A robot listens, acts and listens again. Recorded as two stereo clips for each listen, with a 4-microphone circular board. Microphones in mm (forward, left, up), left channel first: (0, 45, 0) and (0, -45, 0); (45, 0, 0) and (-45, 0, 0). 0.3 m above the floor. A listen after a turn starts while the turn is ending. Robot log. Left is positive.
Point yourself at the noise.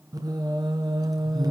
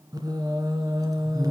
note: The singing: 135° right.
cmd yaw -135
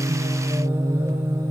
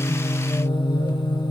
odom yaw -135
note: The singing is now 30° right.
cmd yaw -30
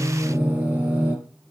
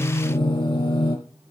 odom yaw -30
note: The singing is now 15° right.
cmd yaw -15
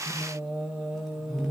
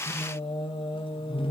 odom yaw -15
end: Facing the singing, over 4 m away.